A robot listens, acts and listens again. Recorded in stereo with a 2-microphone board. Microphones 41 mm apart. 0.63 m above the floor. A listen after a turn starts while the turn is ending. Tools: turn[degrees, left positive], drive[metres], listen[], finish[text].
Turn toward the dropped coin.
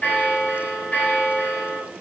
Action: listen[]
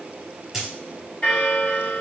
Action: turn[-30]
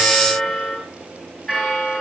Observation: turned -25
Action: listen[]
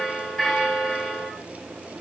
Action: finish[I heard a dropped coin, but can't make it out now. It was about 20° left or 150° right.]